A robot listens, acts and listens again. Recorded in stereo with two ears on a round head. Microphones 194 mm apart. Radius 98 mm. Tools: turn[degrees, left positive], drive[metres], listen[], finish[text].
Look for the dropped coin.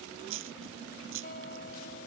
Thought: The dropped coin: about 70° right or 110° right.
Action: turn[-70]
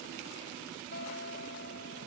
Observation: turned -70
Action: listen[]
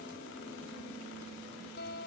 Action: finish[I heard a dropped coin, but can't make it out now. It was about straight ahead or 40° right.]